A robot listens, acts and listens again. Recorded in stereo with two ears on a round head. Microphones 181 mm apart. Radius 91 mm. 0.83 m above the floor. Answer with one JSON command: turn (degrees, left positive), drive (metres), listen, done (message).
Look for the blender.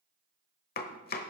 {"listen": true}
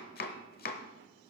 {"listen": true}
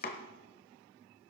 {"done": "I can't make out a blender to turn to."}